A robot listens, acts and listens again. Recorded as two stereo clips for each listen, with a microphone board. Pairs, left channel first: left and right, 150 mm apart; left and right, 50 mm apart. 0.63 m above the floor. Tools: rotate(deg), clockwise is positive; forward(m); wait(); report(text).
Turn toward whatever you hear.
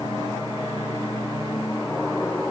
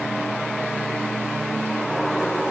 wait()
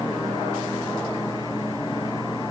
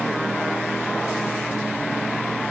wait()
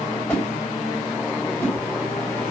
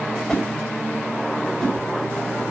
rotate(-15)
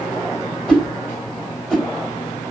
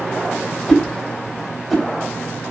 report("Found it: a whoosh, straight ahead, 2 to 4 m away.")